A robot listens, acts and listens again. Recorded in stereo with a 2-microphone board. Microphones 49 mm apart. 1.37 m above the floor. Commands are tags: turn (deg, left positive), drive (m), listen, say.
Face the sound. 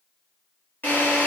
<turn deg="45"/>
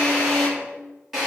<say>Found it: a drill, straight ahead, 2 to 4 m away.</say>